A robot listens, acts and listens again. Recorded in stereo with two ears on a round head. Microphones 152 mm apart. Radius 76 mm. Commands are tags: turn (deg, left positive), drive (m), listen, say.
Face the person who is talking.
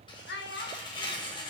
<turn deg="70"/>
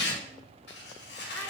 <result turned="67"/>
<listen/>
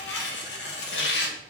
<listen/>
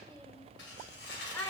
<turn deg="15"/>
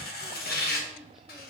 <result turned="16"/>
<listen/>
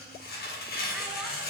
<listen/>
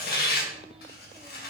<say>Facing where the child speaking came from. I can't hear it now.</say>